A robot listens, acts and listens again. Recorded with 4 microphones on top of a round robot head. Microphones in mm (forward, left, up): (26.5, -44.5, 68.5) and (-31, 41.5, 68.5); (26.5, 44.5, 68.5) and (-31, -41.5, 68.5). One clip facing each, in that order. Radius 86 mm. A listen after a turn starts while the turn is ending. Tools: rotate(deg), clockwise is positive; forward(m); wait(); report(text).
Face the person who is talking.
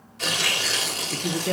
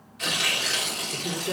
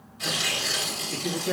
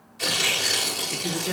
rotate(35)
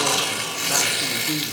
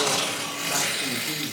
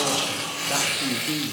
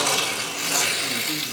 wait()
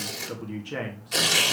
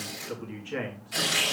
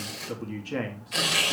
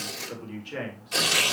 rotate(-10)
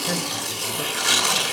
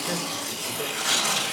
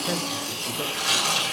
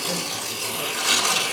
wait()
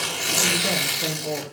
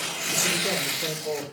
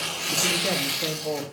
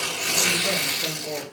report("Facing the man speaking.")